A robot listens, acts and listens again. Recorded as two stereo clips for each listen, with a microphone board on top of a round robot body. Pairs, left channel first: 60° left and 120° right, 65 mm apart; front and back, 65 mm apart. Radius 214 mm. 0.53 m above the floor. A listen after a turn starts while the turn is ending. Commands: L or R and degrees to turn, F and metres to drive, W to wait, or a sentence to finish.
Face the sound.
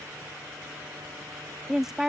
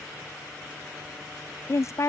R35
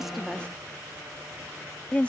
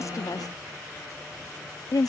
R10
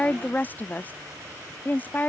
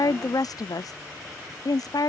Facing the woman speaking.